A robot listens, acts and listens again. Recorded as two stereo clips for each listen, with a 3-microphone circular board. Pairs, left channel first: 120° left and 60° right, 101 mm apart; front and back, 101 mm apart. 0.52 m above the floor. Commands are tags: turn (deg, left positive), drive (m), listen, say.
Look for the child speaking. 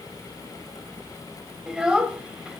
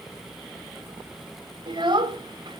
<turn deg="-140"/>
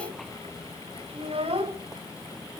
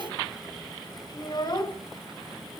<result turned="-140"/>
<turn deg="-45"/>
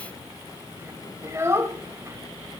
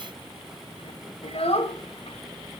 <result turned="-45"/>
<say>Found it: a child speaking, straight ahead, 1 to 2 m away.</say>